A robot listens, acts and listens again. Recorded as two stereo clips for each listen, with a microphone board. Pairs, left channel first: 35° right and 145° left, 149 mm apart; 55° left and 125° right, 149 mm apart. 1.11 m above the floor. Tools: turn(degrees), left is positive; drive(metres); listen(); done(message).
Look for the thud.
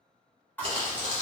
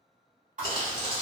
turn(degrees=-110)
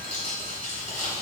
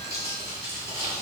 done("Facing where the thud came from. I can't hear it now.")